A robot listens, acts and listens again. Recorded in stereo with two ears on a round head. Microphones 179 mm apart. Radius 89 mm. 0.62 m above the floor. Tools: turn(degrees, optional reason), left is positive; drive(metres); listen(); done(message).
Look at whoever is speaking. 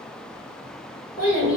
turn(degrees=45, reason="The child speaking: about 45° left or 135° left.")
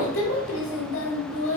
turn(degrees=85, reason="So it is at 85° left.")
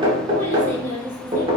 turn(degrees=10, reason="The child speaking is now 10° left.")
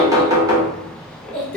done("Facing the child speaking.")